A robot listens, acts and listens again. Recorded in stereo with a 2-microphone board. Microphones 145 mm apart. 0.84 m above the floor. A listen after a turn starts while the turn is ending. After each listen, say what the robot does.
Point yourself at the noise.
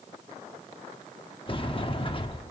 Turn 35° left.
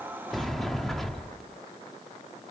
Found it: a sliding door, straight ahead, under 1 m away.